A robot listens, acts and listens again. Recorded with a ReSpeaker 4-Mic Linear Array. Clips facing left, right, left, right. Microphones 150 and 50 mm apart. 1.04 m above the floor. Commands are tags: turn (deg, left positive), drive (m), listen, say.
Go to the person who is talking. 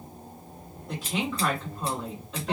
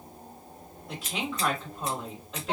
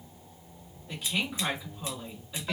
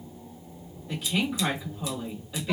<turn deg="30"/>
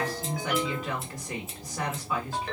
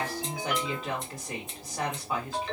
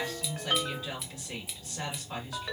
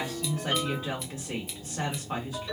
<turn deg="-30"/>
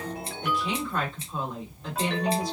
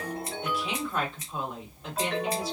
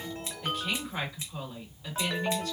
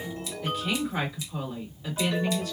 <drive m="1.0"/>
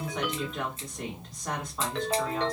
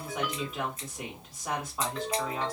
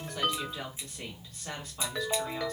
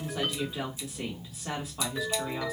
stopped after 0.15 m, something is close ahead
<turn deg="-10"/>
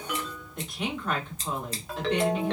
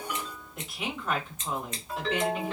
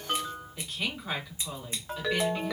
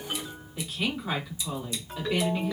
<say>Something is in my way. I am facing the woman speaking but have not reached it.</say>